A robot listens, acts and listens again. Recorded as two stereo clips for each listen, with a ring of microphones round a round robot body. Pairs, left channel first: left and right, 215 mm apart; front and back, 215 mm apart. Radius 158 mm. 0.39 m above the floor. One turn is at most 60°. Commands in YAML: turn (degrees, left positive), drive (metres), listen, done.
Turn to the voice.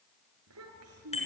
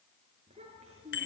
turn: -60
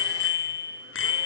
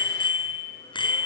turn: -50
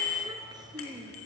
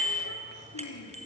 turn: -20
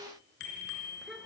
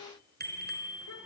listen: true
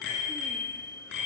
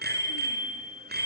listen: true
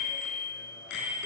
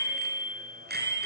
done: "I heard a child speaking from this way, but can't make it out now."